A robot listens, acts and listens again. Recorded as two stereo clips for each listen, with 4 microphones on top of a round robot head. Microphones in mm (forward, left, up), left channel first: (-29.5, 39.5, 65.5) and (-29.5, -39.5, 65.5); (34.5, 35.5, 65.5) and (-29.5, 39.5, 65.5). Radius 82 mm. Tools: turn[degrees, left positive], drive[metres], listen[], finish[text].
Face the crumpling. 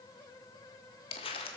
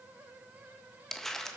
Thought: The crumpling: 80° left.
Action: turn[80]
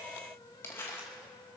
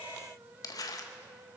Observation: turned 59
Thought: The crumpling is now 20° left.
Action: turn[20]
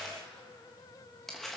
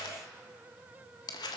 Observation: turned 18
Action: finish[Facing the crumpling, 1 to 2 m away.]